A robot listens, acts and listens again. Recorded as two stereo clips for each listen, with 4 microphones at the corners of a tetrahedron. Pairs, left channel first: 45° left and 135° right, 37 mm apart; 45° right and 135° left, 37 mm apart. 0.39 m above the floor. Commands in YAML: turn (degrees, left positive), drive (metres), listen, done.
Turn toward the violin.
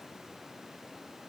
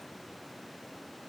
listen: true
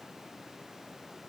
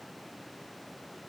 listen: true
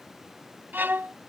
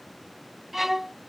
turn: -145
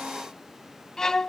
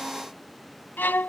turn: -30
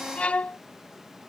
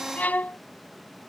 turn: -10
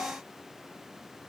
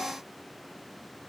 listen: true
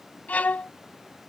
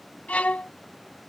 done: "Found it: a violin, straight ahead."